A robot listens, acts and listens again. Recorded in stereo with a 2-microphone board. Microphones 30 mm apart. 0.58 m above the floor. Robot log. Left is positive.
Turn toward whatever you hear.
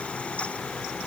cmd idle
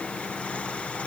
cmd idle
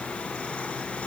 end: I can't make out anything to turn to.